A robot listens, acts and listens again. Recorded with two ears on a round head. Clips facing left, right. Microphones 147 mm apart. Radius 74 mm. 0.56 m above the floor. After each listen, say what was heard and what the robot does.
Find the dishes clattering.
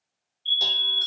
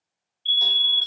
Keep listening.
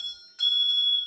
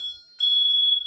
Keep listening.
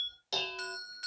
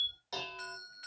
The dishes clattering: about 35° left or 145° left. Turn 35° left.
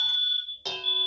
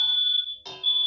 So it is at 110° left. Turn 110° left.
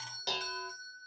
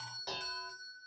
The dishes clattering is now 35° left. Turn 35° left.
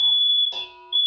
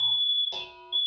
Found it: dishes clattering, straight ahead, 1 to 2 m away.